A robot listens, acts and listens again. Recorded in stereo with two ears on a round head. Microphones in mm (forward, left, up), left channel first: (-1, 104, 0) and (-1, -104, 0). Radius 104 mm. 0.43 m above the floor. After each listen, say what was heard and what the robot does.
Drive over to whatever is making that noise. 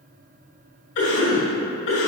The cough: about 60° left or 120° left. Turn 60° left.
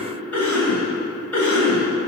So it is at 10° left. Turn 10° left.
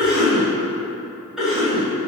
Drive 1.0 m forward.
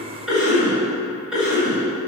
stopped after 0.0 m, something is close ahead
Blocked. The cough is further on, straight ahead.